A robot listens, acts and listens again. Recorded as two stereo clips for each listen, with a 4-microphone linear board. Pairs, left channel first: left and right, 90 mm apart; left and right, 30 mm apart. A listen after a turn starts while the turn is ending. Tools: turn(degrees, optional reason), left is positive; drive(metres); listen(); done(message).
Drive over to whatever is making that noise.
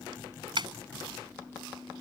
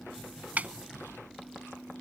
turn(degrees=-60, reason="The snare drum: about 60° right or 120° right.")
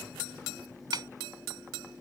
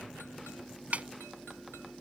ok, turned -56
turn(degrees=-55, reason="So it is at 55° right.")
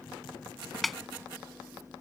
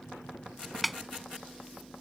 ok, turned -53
drive(metres=1.0)
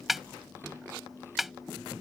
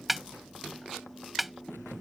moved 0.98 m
drive(metres=1.0)
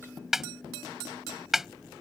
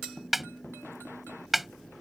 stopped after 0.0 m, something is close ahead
done("Arrived at the snare drum, straight ahead.")